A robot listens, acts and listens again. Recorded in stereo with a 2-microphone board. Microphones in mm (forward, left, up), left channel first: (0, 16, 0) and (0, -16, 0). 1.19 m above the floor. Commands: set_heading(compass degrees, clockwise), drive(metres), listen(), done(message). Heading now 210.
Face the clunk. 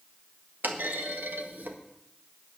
set_heading(280)
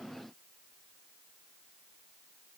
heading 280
listen()
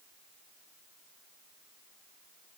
done("I heard a clunk, but can't make it out now. It was about straight ahead or 40° right.")